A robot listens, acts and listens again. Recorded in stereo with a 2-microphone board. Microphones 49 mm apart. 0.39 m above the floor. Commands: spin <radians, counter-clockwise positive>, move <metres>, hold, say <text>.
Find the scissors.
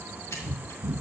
spin 1.13
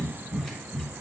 hold
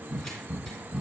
hold
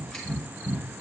say I heard scissors, but can't make it out now. It was about straight ahead or 50° left.